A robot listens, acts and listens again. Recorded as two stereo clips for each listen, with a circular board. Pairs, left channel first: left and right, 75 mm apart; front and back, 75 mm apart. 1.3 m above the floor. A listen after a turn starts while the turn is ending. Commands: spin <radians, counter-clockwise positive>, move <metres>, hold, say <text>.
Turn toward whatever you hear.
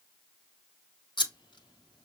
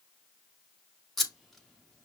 spin 1.57
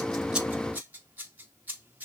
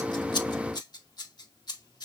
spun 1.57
spin -0.44
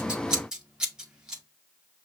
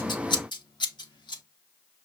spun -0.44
spin -0.17
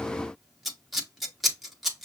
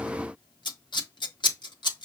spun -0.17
say Facing the scissors, 1 to 2 m away.